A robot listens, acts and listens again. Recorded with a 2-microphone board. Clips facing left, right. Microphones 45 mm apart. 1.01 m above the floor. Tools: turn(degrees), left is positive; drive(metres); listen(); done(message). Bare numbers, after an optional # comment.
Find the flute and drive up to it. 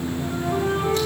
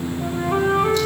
# The flute: about 70° right or 110° right.
turn(-70)
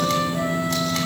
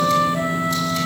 # So it is at 35° right.
turn(-35)
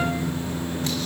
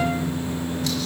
listen()
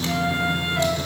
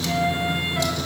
drive(1.0)
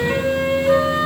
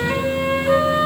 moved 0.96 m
drive(1.0)
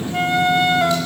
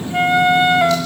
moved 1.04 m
# The flute is now 20° right.
turn(-20)
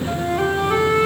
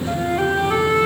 drive(1.0)
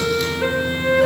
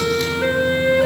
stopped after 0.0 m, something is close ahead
done("Arrived at the flute, straight ahead.")